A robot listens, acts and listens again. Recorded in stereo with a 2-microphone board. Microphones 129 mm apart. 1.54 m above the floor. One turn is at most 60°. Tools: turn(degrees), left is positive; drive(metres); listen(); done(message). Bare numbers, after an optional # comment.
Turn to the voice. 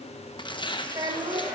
# The child speaking: about 30° right or 150° right.
turn(-30)
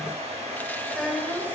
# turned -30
done("Facing the child speaking, 2 to 4 m away.")